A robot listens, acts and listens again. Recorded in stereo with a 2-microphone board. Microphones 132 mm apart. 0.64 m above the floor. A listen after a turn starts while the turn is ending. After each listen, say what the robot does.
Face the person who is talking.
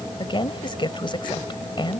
Turn 40° left.
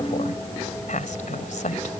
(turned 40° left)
Turn 105° left.
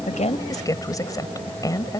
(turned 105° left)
Turn 30° left.
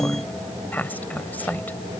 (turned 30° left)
Turn 15° left.
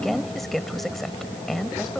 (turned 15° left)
Found it: a woman speaking, straight ahead.